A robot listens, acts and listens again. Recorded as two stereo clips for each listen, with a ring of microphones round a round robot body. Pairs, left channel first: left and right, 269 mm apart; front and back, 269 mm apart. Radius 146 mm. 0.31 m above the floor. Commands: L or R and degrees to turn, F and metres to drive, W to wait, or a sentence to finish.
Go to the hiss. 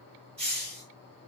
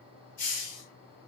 R35
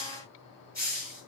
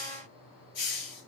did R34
F1.0
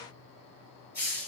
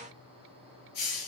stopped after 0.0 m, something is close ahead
Something is in my way. I am facing the hiss but have not reached it.